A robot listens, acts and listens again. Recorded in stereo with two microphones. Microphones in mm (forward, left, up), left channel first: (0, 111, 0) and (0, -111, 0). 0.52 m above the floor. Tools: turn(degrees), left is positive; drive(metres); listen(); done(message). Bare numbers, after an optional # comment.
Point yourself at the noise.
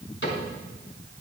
# The cupboard door: about 60° left or 120° left.
turn(60)
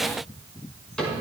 done("Found it: a cupboard door, straight ahead, over 4 m away.")